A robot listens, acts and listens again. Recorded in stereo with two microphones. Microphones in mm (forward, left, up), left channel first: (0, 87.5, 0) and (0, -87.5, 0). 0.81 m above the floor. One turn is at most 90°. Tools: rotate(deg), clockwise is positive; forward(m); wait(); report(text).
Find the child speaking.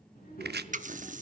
rotate(-55)
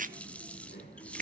rotate(-65)
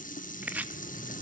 rotate(-25)
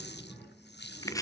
report("Found it: a child speaking, straight ahead.")